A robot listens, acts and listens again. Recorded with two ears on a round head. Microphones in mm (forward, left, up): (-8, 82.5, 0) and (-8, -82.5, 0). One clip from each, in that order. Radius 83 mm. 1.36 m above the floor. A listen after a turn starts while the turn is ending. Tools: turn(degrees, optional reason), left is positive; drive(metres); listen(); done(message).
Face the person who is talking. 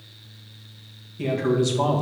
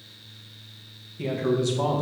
turn(degrees=30)
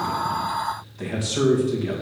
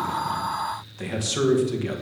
turn(degrees=-25, reason="So it is at 25° right.")
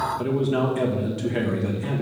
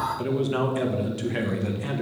turn(degrees=-20, reason="The man speaking is now 20° right.")
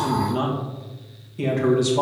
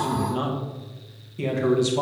done("Facing the man speaking.")